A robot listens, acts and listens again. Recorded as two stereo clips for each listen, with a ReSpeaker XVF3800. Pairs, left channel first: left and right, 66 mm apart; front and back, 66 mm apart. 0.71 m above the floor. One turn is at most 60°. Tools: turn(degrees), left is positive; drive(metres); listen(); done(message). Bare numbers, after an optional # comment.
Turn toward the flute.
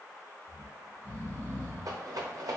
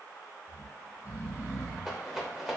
listen()
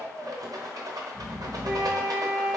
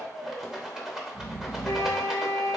# The flute: 25° right.
turn(-25)
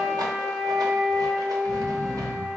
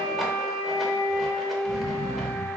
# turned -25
# The flute is now 20° right.
turn(-20)
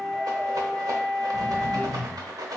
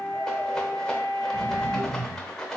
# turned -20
done("Found it: a flute, straight ahead.")